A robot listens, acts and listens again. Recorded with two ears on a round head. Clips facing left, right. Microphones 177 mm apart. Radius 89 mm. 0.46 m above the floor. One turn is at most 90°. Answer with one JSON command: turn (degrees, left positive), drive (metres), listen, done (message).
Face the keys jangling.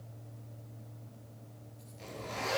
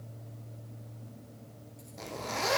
{"listen": true}
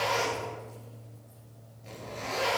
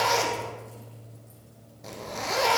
{"listen": true}
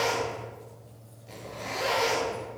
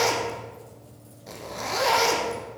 {"done": "I can't make out keys jangling to turn to."}